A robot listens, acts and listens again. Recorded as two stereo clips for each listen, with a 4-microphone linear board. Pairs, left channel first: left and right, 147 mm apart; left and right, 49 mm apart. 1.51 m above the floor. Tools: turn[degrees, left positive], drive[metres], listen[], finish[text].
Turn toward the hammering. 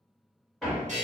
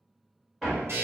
Action: turn[30]
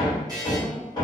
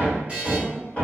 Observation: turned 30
Thought: So it is at 150° left.
Action: turn[150]
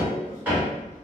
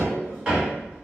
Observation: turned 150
Thought: The hammering is now 15° right.
Action: turn[-15]
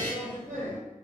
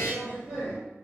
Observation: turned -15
Action: finish[Facing the hammering, 1 to 2 m away.]